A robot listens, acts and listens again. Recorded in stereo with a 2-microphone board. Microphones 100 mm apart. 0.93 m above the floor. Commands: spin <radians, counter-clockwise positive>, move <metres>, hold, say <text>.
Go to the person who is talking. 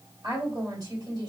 spin -0.70
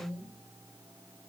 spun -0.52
spin -1.83
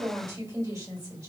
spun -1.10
spin -0.70
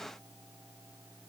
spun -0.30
spin -0.44
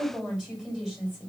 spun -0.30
move 1.0
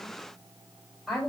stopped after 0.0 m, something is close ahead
say Blocked. The woman speaking is further on, straight ahead.